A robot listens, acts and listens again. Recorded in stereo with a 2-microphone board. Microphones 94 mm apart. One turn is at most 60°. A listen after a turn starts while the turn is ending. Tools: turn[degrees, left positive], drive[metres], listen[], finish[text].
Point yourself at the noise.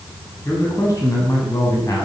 Thought: The man speaking: about 35° left or 145° left.
Action: turn[35]
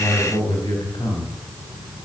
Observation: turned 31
Thought: So it is at 115° left.
Action: turn[60]
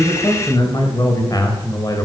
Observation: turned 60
Thought: The man speaking is now 35° left.
Action: turn[35]
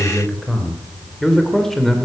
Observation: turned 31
Action: finish[Facing the man speaking.]